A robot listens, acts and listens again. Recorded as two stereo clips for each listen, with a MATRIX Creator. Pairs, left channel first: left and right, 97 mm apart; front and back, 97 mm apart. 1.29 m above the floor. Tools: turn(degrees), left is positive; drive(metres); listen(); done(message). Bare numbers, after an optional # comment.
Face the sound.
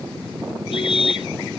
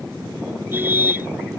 # The car horn: 110° left.
turn(110)
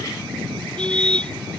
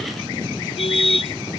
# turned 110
# The car horn is now 10° left.
turn(10)
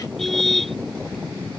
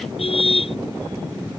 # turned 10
done("Facing the car horn.")